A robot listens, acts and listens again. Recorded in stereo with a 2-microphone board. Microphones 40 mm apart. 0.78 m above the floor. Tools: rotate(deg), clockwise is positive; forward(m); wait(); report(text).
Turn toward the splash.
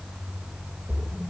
rotate(20)
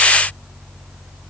wait()
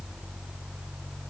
report("I heard a splash, but can't make it out now. It was about straight ahead or 140° right.")